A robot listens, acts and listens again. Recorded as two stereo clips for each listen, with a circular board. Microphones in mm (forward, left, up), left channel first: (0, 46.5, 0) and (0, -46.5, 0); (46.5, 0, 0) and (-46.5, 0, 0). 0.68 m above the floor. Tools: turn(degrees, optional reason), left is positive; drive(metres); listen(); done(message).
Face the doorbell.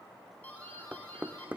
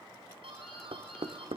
turn(degrees=160, reason="The doorbell: 160° left.")
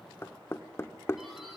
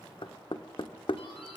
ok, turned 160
listen()
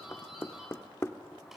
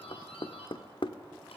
done("Found it: a doorbell, straight ahead, over 4 m away.")